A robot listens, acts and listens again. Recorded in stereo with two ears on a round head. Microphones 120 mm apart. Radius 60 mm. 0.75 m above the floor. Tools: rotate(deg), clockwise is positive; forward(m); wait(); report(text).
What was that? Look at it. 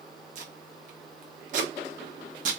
rotate(60)
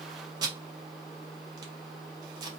rotate(35)
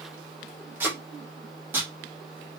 rotate(15)
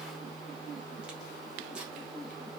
wait()
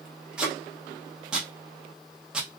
report("Found it: tape being pulled, straight ahead, under 1 m away.")